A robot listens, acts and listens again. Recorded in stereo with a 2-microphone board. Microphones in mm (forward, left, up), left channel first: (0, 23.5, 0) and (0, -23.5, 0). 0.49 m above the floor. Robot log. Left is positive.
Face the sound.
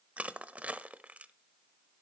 note: The crushing: about 30° right or 150° right.
cmd yaw -30
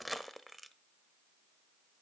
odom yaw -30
end: Facing the crushing.